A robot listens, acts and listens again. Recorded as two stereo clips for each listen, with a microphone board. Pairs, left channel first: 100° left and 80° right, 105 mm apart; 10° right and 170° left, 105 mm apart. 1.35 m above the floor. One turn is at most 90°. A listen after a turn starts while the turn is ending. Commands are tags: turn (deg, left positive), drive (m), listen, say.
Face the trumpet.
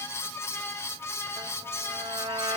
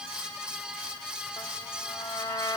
<turn deg="-70"/>
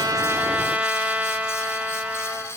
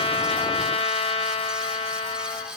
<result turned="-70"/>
<say>Facing the trumpet.</say>